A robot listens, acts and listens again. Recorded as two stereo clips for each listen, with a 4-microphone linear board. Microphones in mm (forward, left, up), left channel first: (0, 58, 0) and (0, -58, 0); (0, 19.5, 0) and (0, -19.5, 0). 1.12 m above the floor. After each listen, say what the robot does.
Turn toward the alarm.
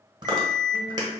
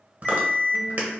Turn 25° left.
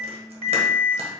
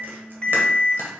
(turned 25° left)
Turn 130° left.
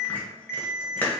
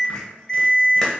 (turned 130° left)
Facing the alarm.